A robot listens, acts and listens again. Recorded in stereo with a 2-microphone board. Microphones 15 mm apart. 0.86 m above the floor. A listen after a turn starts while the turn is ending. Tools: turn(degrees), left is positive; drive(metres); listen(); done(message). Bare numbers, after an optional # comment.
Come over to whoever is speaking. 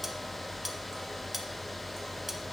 listen()
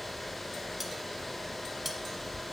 listen()
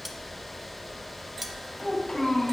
# The child speaking: about 55° left or 125° left.
turn(55)
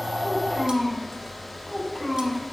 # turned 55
drive(1.0)
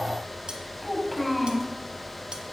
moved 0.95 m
# The child speaking is now 10° left.
turn(10)
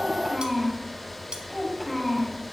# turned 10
drive(1.0)
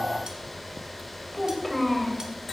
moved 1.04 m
drive(1.0)
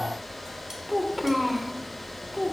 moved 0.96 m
# The child speaking is now 10° right.
turn(-10)
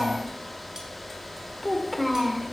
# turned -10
drive(1.0)
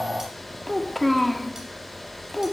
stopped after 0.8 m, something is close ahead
done("Arrived at the child speaking, straight ahead.")